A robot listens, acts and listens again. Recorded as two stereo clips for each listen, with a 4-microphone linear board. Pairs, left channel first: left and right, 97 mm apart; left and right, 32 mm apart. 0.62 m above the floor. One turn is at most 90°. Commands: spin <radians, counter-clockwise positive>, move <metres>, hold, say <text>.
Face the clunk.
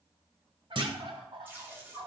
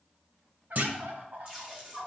spin -0.96
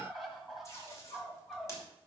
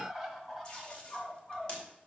hold
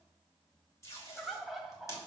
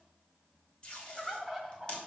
say I heard a clunk, but can't make it out now. It was about straight ahead or 70° right.